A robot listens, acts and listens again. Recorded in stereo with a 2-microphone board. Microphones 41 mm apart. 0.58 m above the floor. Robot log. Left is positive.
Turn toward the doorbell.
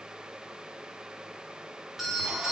cmd yaw -30
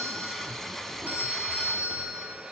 note: So it is at 140° right.
cmd yaw -140
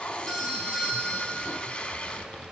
end: Facing the doorbell, over 4 m away.